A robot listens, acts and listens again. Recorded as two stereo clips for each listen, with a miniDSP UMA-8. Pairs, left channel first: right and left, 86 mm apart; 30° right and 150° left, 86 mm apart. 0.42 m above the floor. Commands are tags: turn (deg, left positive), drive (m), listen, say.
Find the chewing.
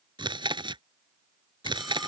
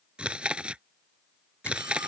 <turn deg="70"/>
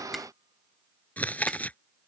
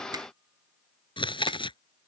<turn deg="-20"/>
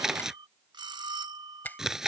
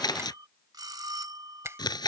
<say>Facing the chewing.</say>